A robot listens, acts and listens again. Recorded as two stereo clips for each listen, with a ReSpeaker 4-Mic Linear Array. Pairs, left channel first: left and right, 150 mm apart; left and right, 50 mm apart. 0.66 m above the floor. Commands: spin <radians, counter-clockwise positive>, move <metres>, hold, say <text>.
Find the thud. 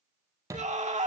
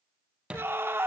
spin -0.35
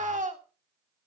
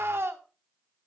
hold
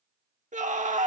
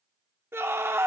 say I heard a thud, but can't make it out now. It was about straight ahead or 140° right.